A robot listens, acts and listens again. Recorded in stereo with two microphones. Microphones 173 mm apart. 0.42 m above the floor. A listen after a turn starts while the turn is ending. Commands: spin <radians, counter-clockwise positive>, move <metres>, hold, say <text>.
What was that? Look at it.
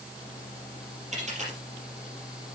spin -0.79
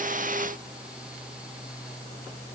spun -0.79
hold
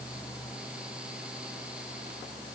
say I heard a dropped coin, but can't make it out now. It was about straight ahead or 90° right.